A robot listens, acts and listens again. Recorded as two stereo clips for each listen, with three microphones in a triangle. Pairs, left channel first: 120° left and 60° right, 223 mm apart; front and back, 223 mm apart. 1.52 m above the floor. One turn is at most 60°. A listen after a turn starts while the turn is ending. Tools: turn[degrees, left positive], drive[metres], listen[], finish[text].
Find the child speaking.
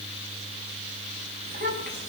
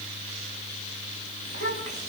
Thought: The child speaking: 15° right.
Action: turn[-15]
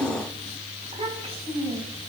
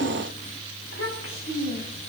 Action: finish[Facing the child speaking.]